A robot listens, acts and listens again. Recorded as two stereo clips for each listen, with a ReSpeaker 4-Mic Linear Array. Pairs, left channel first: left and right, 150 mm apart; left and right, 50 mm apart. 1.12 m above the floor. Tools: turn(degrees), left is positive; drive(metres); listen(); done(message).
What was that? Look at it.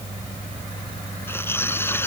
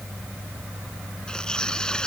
turn(degrees=30)
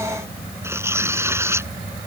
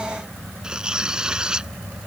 turn(degrees=-15)
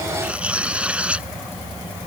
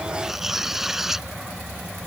turn(degrees=-10)
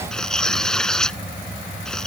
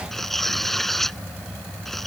done("Facing the tearing paper.")